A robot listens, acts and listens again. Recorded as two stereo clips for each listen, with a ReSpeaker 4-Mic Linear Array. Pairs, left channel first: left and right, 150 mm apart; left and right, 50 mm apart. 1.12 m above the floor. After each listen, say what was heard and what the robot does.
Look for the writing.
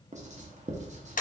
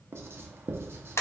The writing: about 50° right or 130° right. Turn 50° right.
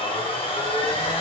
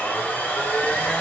Keep listening.
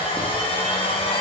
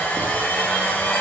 Keep listening.
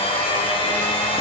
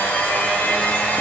I heard writing, but can't make it out now. It was about straight ahead or 80° right.